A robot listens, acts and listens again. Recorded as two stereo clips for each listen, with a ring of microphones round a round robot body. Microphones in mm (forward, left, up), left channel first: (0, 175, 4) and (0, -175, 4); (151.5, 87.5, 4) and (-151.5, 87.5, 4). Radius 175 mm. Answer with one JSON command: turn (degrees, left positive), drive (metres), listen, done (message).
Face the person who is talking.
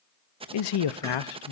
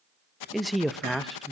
{"turn": 90}
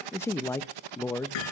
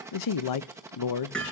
{"done": "Facing the man speaking."}